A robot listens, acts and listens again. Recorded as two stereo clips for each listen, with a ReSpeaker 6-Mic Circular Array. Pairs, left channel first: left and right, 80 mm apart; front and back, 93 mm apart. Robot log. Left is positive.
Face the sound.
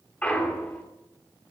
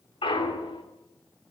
note: The clunk: 15° left.
cmd yaw +15
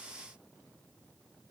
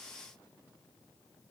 end: Facing where the clunk came from. I can't hear it now.